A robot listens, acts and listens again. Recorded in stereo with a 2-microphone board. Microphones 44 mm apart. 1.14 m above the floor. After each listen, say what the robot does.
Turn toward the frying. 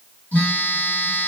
Keep listening.
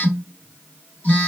Keep listening.
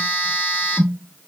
I can't make out frying to turn to.